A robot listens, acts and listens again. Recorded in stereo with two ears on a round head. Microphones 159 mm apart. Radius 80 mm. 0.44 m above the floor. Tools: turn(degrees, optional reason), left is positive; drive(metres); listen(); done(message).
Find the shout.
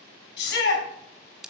turn(degrees=65, reason="The shout: about 65° left or 115° left.")
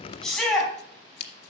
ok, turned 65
done("Found it: a shout, straight ahead, over 4 m away.")